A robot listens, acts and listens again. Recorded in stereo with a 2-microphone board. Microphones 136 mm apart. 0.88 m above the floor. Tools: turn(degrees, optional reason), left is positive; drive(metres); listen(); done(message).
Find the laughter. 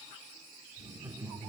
turn(degrees=-25, reason="The laughter: about 25° right or 155° right.")
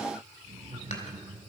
turn(degrees=-135, reason="So it is at 135° right.")
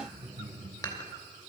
turn(degrees=-40, reason="The laughter is now 40° right.")
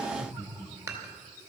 done("Found it: laughter, straight ahead.")